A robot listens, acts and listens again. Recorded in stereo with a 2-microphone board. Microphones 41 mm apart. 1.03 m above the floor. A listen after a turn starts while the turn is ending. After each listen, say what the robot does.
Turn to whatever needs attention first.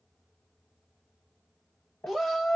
Turn 30° left.
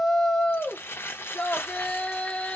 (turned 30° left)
Turn 150° left.
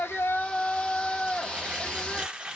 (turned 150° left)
Turn 25° left.
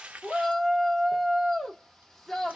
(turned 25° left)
Facing the shout.